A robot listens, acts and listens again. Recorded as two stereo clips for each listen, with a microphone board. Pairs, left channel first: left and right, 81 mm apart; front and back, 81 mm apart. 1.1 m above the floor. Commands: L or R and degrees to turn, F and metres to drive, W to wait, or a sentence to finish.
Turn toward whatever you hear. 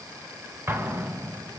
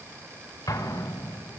R30
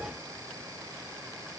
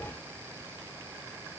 Facing where the explosion came from. I can't hear it now.